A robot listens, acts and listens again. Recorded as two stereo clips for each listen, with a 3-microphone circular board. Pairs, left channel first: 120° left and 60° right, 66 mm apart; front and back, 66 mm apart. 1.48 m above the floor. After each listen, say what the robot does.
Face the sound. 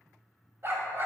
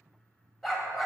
Turn 90° right.
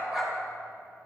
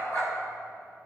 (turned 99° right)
Turn 10° left.
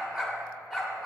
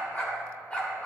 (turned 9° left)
Turn 15° left.
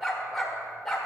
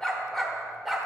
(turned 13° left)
Turn 100° left.
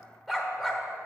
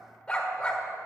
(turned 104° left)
Turn 45° left.
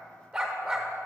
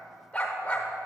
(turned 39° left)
Facing the dog barking, 1 to 2 m away.